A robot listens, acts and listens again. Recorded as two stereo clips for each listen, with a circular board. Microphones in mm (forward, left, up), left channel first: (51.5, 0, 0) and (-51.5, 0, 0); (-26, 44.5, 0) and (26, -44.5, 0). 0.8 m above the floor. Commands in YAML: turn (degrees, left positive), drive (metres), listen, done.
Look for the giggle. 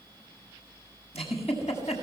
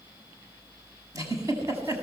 done: "Facing the giggle, over 4 m away."